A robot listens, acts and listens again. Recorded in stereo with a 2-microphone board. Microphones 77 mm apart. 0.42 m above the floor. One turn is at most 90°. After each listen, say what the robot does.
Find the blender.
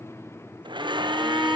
Turn 90° right.
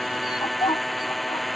Facing the blender.